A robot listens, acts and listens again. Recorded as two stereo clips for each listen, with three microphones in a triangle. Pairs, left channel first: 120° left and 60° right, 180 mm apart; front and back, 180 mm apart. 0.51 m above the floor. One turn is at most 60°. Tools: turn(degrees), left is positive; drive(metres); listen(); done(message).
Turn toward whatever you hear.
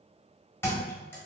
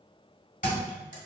turn(degrees=40)
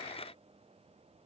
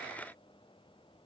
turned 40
done("I heard a thud from this way, but can't make it out now.")